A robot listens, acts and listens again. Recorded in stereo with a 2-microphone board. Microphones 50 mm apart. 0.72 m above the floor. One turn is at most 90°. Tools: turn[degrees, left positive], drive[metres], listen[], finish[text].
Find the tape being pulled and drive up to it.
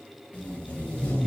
Thought: The tape being pulled: about 30° left or 150° left.
Action: turn[30]
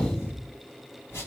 Thought: So it is at 120° left.
Action: turn[90]
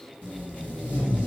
Thought: The tape being pulled is now 30° left.
Action: turn[30]
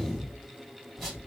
Action: drive[1.0]
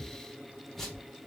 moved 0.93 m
Action: drive[1.0]
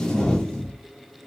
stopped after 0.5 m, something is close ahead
Thought: The tape being pulled is now 15° left.
Action: turn[15]
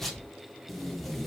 Action: finish[Arrived at the tape being pulled, straight ahead.]